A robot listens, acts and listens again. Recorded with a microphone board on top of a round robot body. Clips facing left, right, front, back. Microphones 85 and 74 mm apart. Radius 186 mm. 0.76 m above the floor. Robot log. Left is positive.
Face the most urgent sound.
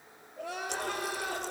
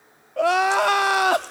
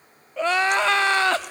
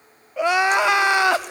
note: The crying: 105° right.
cmd yaw -105
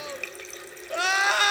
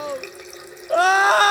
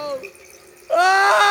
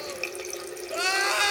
note: The crying is now 40° right.
cmd yaw -40
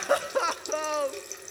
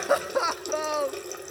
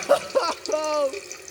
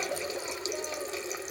end: Found it: crying, straight ahead.